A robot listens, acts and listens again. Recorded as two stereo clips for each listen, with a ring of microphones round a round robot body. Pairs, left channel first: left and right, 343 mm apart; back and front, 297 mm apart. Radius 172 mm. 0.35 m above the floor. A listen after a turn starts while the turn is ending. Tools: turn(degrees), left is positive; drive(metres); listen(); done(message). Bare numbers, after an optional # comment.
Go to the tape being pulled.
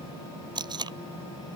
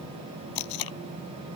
# The tape being pulled: 170° right.
turn(-170)
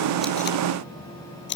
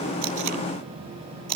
# The tape being pulled is now 30° left.
turn(30)
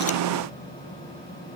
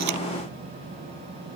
listen()
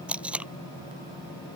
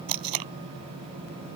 drive(1.0)
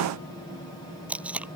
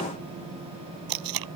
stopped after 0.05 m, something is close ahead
done("Something is in my way. I am facing the tape being pulled but have not reached it.")